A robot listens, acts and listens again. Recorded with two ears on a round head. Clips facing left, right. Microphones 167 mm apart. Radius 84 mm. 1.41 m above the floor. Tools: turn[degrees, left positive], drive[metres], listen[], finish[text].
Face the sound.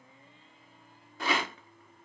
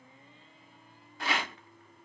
Action: turn[90]
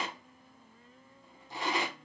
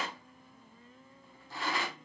Thought: So it is at 15° left.
Action: turn[15]
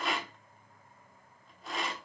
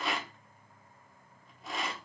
Action: finish[Facing the rattle, 1 to 2 m away.]